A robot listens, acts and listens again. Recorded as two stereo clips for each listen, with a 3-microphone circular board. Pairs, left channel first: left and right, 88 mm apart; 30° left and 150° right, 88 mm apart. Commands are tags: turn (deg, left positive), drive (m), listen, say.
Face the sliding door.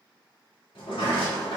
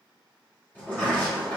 <turn deg="100"/>
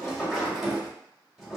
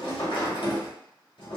<say>Facing the sliding door.</say>